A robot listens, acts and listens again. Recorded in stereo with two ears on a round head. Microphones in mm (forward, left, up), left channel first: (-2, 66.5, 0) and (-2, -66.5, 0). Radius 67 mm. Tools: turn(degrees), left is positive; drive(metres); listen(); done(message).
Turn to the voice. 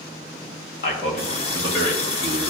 turn(degrees=65)
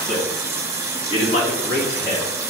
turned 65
turn(degrees=50)
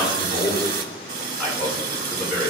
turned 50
done("Found it: a man speaking, straight ahead, over 4 m away.")